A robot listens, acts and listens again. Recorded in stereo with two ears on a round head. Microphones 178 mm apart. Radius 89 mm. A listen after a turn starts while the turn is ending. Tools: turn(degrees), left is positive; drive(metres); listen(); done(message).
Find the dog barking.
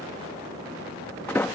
listen()
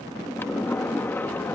listen()
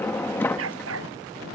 turn(degrees=-90)
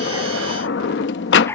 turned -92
turn(degrees=10)
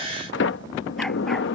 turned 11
listen()
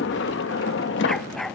done("Facing the dog barking.")